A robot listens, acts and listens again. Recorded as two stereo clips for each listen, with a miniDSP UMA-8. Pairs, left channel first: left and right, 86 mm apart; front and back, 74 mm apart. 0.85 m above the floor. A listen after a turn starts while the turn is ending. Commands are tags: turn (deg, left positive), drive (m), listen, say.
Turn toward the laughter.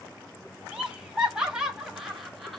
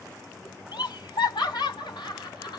<say>Found it: laughter, straight ahead, 1 to 2 m away.</say>